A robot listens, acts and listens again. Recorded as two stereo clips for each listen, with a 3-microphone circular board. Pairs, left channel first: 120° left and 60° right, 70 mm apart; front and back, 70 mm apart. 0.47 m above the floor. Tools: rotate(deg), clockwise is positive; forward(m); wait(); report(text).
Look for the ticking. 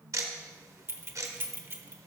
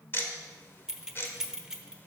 rotate(45)
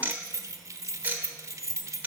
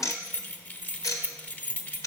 report("Facing the ticking.")